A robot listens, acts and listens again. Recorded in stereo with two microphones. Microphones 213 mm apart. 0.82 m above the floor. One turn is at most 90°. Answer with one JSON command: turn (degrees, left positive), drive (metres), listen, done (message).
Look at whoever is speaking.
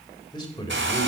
{"turn": 20}
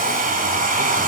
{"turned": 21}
{"listen": true}
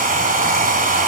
{"listen": true}
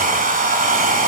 {"done": "I heard a man speaking, but can't make it out now. It was about straight ahead or 140° left."}